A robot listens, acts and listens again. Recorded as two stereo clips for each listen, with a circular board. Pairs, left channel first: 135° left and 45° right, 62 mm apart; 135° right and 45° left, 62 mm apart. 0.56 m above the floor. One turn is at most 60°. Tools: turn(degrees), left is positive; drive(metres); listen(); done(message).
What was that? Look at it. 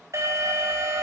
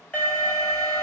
turn(degrees=-60)
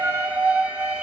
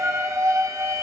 turn(degrees=15)
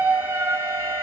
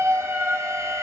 done("Found it: an alarm, straight ahead, over 4 m away.")